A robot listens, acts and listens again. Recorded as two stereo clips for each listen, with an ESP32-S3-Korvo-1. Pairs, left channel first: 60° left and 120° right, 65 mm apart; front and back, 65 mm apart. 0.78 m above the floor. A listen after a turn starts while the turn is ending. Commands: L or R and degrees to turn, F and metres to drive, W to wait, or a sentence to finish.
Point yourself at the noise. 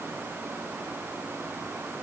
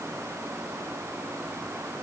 W
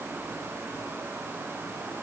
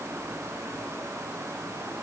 W
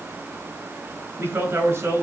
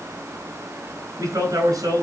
R165
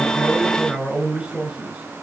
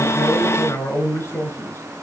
R40
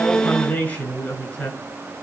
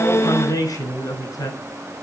Found it: a man speaking, straight ahead, over 4 m away.